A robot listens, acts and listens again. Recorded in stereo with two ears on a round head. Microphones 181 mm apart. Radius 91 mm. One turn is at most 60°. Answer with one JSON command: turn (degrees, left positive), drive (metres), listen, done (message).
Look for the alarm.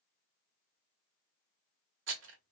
{"listen": true}
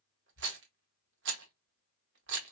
{"listen": true}
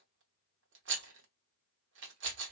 {"done": "I can't make out an alarm, only a rattle."}